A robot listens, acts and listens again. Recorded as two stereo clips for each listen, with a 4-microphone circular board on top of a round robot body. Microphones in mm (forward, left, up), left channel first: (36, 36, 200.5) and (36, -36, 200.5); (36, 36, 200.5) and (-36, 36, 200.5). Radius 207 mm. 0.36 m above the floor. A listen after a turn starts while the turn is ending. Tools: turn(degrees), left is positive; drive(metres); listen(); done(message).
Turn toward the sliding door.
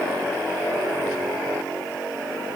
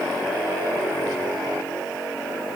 listen()
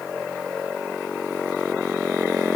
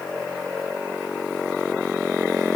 listen()
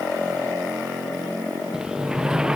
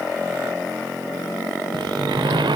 turn(degrees=-170)
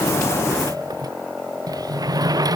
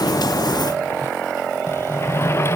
turn(degrees=-55)
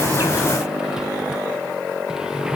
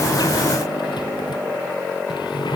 listen()
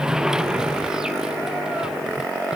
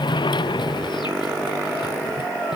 turn(degrees=-10)
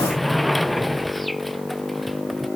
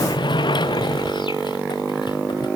done("Found it: a sliding door, straight ahead.")